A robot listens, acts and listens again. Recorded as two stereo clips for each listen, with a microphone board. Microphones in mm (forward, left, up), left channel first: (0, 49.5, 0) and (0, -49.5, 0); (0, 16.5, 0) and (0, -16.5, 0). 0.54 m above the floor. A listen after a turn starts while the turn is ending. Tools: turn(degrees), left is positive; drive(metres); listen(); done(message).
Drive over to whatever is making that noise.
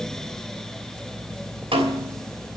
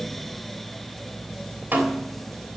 turn(degrees=-65)
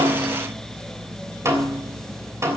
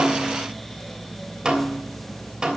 turn(degrees=-30)
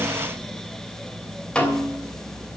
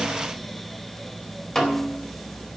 turn(degrees=10)
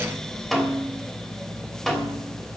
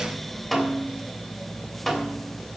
drive(metres=1.0)
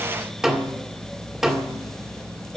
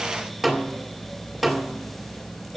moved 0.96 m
drive(metres=1.0)
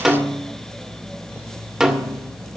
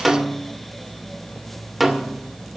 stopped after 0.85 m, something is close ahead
turn(degrees=-10)
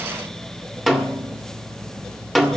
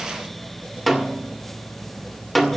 done("Arrived at the snare drum, straight ahead.")